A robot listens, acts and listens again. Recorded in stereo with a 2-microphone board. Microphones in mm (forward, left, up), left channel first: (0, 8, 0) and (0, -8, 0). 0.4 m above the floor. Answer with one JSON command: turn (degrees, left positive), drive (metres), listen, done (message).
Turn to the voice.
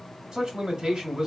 {"turn": -60}
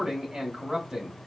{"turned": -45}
{"turn": -65}
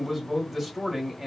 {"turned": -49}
{"turn": -15}
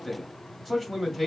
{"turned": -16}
{"done": "Found it: a man speaking, straight ahead."}